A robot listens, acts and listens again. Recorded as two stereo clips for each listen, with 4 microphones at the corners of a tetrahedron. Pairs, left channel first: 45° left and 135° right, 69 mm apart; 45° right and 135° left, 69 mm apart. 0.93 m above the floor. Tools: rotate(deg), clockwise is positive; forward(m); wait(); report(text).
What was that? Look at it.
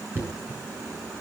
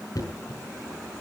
rotate(75)
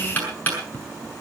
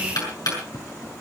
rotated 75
rotate(20)
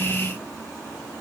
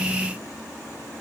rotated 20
wait()
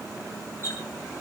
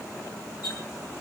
rotate(10)
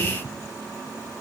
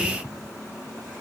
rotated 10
wait()
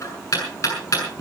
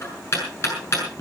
report("Found it: knocking, straight ahead.")